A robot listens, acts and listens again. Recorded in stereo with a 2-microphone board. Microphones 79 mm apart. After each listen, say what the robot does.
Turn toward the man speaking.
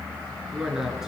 Turn 30° right.
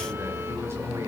Keep listening.
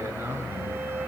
Turn 145° right.
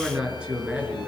Turn 10° right.
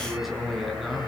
Found it: a man speaking, straight ahead.